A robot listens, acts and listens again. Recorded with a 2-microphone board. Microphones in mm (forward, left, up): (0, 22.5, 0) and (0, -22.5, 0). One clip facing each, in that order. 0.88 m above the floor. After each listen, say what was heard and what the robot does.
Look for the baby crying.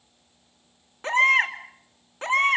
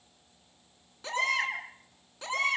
The baby crying: about 40° left or 140° left. Turn 40° left.
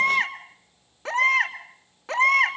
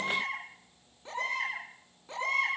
So it is at 100° left. Turn 100° left.
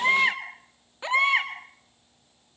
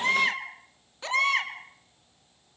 The baby crying is now 20° left. Turn 20° left.
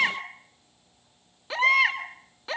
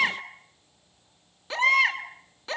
Facing the baby crying, 2 to 4 m away.